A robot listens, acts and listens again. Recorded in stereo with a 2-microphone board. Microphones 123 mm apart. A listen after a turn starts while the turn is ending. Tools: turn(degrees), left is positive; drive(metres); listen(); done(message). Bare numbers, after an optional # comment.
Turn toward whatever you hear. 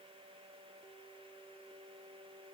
listen()
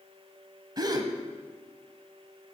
# The gasp: about 35° right or 145° right.
turn(-35)
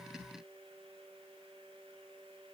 listen()
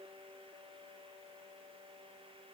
done("I heard a gasp, but can't make it out now. It was about straight ahead or 110° right.")